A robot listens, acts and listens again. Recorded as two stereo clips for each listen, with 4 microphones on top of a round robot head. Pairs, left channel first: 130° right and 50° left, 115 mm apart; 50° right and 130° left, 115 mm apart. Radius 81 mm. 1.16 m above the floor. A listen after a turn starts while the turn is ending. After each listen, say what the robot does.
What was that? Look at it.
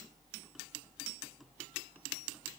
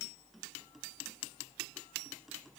Keep listening.
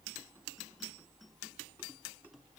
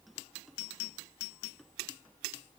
Keep listening.
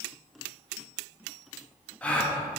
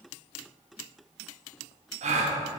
Turn 150° left.
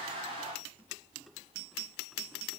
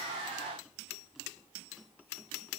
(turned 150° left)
I heard a gasp from this way, but can't make it out now.